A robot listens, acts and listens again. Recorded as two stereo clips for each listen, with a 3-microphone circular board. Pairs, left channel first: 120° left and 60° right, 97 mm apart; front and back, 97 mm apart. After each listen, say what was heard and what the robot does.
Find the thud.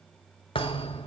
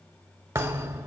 The thud: 125° left. Turn 125° left.
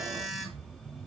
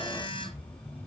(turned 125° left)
I heard a thud from this way, but can't make it out now.